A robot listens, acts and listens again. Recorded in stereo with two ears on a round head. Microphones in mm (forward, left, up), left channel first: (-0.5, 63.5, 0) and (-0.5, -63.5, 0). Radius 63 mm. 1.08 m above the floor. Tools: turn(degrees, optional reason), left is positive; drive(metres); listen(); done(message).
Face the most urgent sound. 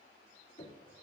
listen()
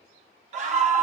turn(degrees=-50, reason="The scream: about 50° right or 130° right.")
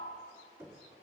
listen()
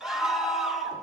done("Facing the scream.")